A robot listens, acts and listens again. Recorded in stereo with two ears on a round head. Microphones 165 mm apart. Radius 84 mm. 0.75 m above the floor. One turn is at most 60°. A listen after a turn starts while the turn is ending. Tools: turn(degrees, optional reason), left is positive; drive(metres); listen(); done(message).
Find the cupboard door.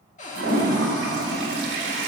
turn(degrees=40, reason="The cupboard door: about 40° left or 140° left.")
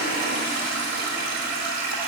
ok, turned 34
listen()
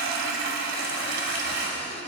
listen()
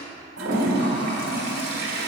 done("I heard a cupboard door, but can't make it out now. It was about 10° left or 105° left.")